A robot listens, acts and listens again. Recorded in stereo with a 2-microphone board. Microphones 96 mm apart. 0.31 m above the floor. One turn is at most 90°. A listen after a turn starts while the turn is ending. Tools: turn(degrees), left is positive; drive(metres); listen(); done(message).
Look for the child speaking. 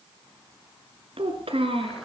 turn(degrees=-90)
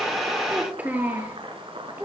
turn(degrees=-20)
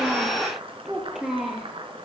done("Facing the child speaking, over 4 m away.")